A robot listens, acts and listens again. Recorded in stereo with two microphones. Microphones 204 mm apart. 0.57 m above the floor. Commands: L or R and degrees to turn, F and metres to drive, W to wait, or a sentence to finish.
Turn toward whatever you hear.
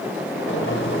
L70
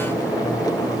L20
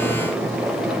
Facing the boiling.